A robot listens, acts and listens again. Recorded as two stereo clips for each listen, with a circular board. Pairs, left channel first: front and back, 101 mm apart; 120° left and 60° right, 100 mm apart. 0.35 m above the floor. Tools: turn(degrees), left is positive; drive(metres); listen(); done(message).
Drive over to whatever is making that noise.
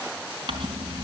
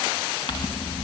turn(degrees=150)
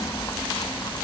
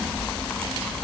turn(degrees=45)
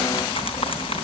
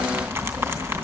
drive(metres=1.0)
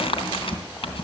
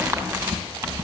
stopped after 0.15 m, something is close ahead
done("Something is in my way. I am facing the crumpling but have not reached it.")